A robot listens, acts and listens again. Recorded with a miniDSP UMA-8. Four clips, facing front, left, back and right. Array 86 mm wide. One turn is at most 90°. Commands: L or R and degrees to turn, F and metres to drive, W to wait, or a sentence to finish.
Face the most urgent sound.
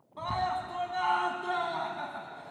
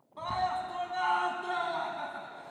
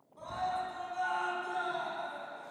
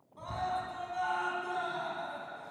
L35
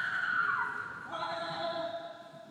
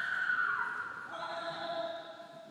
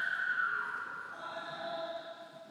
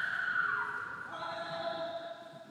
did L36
Facing the scream.